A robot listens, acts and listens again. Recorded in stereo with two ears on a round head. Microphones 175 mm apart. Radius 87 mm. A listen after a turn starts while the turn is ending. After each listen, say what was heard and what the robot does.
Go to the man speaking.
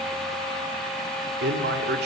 The man speaking: about 55° right or 125° right. Turn 55° right.
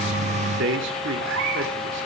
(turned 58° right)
So it is at 65° right. Turn 65° right.
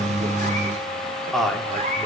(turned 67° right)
Drive 1.0 m forward.
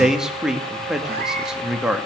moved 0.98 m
Drive 1.0 m forward.
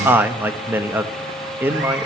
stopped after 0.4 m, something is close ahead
The man speaking is now 10° right. Turn 10° right.
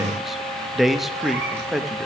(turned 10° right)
I am next to the man speaking.